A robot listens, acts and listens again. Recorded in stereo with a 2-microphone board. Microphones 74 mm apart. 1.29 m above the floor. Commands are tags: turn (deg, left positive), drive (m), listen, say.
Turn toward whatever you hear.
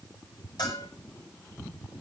<turn deg="70"/>
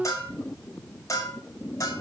<turn deg="45"/>
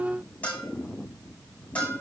<turn deg="15"/>
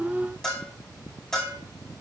<say>Facing the bell, over 4 m away.</say>